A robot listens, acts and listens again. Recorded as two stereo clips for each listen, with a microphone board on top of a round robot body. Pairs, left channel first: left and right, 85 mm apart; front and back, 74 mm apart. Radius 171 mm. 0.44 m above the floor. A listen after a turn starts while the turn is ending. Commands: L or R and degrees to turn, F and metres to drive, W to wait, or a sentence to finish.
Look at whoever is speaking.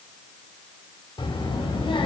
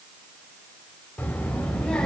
L80
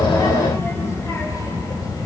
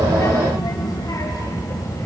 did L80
L45
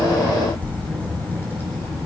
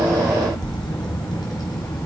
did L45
L25
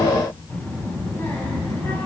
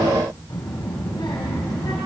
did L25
L25
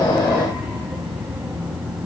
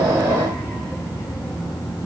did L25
R10
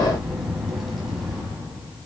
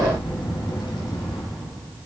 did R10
Facing the child speaking, 2 to 4 m away.